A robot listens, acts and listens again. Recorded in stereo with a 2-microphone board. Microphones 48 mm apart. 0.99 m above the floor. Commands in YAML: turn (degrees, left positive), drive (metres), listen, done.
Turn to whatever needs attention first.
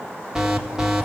turn: -15
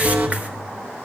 turn: -150
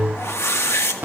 turn: -40
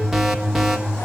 done: "Found it: an alarm, straight ahead, 1 to 2 m away."